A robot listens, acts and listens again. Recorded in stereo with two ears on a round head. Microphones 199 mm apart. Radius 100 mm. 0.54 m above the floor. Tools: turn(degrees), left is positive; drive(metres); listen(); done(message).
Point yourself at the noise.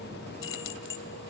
turn(degrees=60)
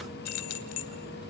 turn(degrees=75)
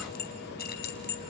turn(degrees=45)
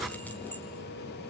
listen()
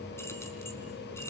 listen()
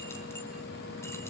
done("Facing where the keys jangling came from. I can't hear it now.")